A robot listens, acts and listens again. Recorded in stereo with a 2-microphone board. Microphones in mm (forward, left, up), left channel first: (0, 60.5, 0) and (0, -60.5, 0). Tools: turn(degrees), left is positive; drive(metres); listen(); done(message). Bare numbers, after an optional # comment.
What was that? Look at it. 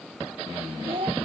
# The child speaking: about 50° right or 130° right.
turn(-50)
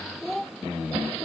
done("Found it: a child speaking, straight ahead.")